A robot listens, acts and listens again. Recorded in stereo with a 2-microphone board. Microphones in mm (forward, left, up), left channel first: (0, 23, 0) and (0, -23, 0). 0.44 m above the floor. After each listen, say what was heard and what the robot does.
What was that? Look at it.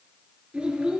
The child speaking: about 20° right or 160° right. Turn 20° right.
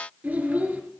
So it is at 140° right. Turn 140° right.
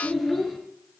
Found it: a child speaking, straight ahead.